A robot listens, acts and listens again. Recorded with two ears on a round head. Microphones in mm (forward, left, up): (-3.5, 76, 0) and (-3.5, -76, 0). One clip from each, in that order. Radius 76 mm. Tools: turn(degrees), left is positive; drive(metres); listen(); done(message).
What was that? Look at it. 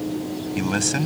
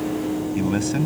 turn(degrees=45)
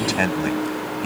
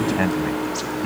turn(degrees=90)
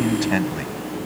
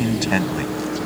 turn(degrees=-10)
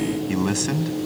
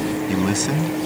done("Facing the man speaking.")